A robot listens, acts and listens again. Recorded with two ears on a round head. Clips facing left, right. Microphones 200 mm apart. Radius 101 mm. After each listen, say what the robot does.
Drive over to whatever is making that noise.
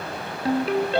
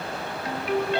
Turn 30° left.
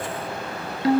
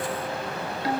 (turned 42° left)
Turn 105° left.
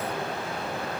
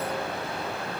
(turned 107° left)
Keep listening.
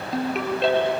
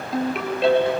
Drive 1.0 m forward.
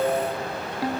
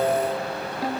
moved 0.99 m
Drive 1.0 m forward.
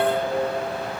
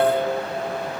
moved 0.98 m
Drive 1.0 m forward.
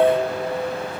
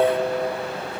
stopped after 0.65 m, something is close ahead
I am next to the ringtone.